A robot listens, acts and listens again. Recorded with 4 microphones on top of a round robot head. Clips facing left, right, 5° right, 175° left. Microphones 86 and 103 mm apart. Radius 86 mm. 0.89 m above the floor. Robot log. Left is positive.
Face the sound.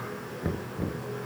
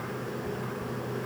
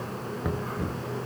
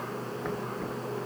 note: The knocking: 75° left.
cmd yaw +75
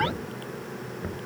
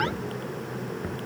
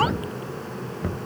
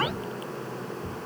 end: Facing the knocking.